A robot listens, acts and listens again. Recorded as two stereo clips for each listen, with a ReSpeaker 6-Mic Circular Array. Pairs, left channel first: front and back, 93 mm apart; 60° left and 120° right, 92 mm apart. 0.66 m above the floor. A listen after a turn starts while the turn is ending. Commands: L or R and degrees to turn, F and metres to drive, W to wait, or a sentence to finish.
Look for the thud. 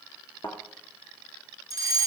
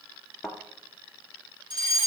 R25
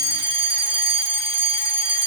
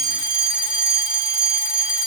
Facing where the thud came from. I can't hear it now.